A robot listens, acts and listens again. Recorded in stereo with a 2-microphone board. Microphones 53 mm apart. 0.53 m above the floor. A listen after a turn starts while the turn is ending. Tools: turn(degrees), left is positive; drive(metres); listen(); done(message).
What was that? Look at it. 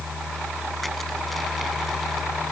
listen()
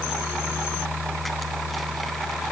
listen()
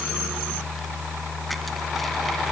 done("I can't make out anything to turn to.")